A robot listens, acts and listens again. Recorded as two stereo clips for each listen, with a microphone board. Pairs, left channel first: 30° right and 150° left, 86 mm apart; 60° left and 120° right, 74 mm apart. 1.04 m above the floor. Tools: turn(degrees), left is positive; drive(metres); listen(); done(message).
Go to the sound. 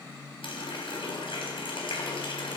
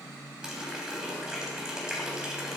turn(degrees=-40)
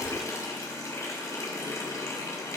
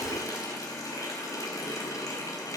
turn(degrees=25)
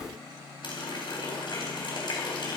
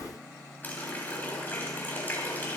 drive(metres=1.0)
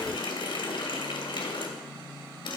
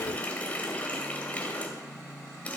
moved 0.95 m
turn(degrees=-10)
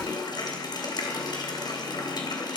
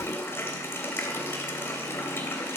drive(metres=1.0)
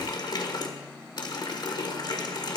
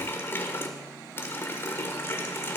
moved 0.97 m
drive(metres=1.0)
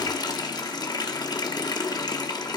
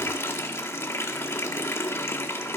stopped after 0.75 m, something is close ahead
done("I am next to the running tap.")